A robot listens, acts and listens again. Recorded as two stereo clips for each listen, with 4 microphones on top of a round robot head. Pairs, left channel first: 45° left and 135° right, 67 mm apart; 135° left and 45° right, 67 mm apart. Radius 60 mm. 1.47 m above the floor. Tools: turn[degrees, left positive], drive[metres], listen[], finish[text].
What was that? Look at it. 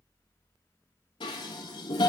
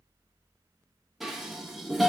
Thought: The dishes clattering: 40° left.
Action: turn[40]
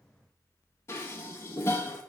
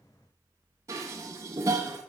Action: finish[Facing the dishes clattering, 1 to 2 m away.]